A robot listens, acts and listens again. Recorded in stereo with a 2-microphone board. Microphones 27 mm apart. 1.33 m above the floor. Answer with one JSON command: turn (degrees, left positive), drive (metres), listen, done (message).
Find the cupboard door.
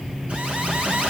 {"listen": true}
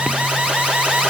{"listen": true}
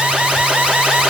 {"done": "I can't make out a cupboard door to turn to."}